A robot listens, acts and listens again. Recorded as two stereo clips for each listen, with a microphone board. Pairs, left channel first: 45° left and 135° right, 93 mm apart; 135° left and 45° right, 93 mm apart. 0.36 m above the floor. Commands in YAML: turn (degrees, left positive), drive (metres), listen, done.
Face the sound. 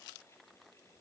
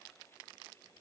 listen: true
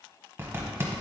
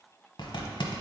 turn: 160
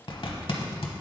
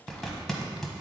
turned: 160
turn: 50
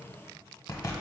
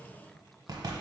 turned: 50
done: "Facing the zipper, 1 to 2 m away."